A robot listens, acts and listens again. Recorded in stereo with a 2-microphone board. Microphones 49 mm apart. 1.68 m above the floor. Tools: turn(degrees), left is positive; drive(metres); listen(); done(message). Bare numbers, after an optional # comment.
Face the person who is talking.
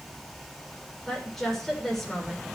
turn(30)
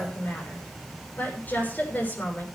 # So it is at 140° left.
turn(140)
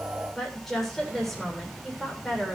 done("Facing the woman speaking, over 4 m away.")